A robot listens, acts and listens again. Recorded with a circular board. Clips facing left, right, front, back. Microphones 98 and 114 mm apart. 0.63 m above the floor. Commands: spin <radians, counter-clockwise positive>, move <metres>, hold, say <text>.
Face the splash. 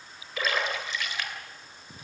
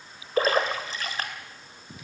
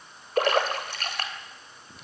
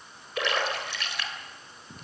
spin -0.70
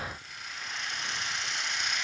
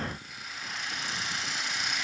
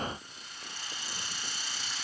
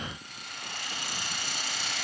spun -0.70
say Facing where the splash came from. I can't hear it now.